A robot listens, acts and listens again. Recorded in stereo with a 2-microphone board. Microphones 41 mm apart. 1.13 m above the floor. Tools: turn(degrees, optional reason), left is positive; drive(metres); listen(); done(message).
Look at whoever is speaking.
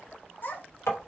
turn(degrees=50, reason="The child speaking: about 50° left or 130° left.")
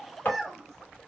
done("Found it: a child speaking, straight ahead, 1 to 2 m away.")